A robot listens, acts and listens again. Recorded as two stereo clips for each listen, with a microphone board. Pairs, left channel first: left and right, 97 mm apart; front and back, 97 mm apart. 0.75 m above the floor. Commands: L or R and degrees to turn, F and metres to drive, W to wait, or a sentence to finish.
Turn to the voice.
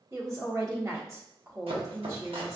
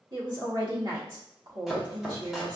R145
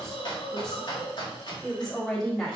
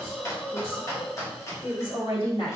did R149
Found it: a woman speaking, straight ahead, 1 to 2 m away.